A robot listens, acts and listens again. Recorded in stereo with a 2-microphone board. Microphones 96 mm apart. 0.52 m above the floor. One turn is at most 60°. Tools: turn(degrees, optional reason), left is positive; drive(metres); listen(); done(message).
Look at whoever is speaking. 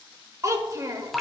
turn(degrees=-35, reason="The child speaking: about 35° right or 145° right.")
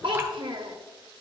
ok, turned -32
turn(degrees=-60, reason="So it is at 110° right.")
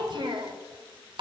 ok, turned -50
turn(degrees=-60, reason="The child speaking is now 60° right.")
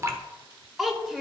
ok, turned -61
done("Found it: a child speaking, straight ahead.")